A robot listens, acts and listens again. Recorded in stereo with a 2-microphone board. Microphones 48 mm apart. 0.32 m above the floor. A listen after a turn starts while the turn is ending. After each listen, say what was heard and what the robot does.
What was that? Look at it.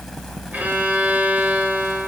The violin: about 35° right or 145° right. Turn 35° right.
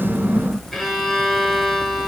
Found it: a violin, straight ahead.